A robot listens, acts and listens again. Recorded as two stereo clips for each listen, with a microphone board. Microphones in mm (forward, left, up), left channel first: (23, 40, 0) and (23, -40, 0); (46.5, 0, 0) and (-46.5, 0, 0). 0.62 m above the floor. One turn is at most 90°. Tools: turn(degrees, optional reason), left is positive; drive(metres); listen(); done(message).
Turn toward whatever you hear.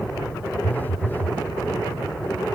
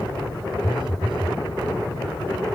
turn(degrees=90, reason="The phone buzzing: 155° left.")
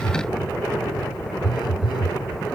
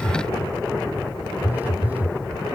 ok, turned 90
turn(degrees=90, reason="The phone buzzing is now 110° left.")
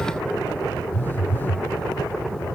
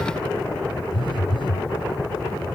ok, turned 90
turn(degrees=25, reason="The phone buzzing is now 25° left.")
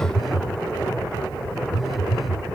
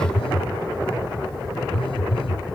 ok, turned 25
done("Facing the phone buzzing.")